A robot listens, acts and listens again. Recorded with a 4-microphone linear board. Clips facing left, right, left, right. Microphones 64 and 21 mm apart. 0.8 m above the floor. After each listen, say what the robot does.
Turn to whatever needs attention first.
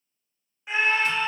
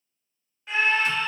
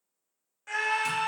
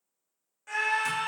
Turn 15° left.
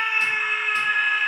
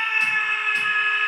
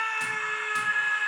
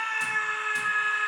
Facing the scream, under 1 m away.